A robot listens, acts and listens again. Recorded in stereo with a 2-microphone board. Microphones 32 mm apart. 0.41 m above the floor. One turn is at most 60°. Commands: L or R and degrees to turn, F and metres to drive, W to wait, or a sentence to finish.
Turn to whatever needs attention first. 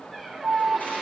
R55
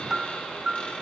R15
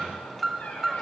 Found it: an alarm, straight ahead.